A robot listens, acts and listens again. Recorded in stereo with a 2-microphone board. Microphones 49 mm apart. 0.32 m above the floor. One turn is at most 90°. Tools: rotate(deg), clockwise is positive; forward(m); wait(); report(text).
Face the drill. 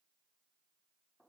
wait()
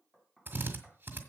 rotate(40)
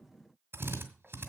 rotate(90)
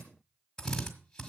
rotate(-15)
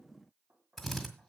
report("Found it: a drill, straight ahead.")